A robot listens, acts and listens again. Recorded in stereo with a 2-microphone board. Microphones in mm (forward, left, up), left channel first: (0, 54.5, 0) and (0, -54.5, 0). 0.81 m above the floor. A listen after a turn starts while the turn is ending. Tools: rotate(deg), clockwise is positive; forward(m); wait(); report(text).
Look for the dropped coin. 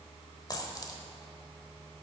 rotate(-35)
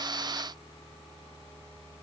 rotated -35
wait()
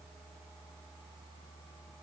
report("I heard a dropped coin, but can't make it out now. It was about straight ahead or 110° left.")